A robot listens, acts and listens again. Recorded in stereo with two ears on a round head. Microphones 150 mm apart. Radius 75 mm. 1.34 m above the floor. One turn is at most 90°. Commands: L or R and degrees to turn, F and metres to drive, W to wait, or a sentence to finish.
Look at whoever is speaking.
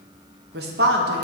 R65
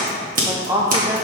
R20
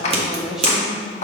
Found it: a woman speaking, straight ahead, under 1 m away.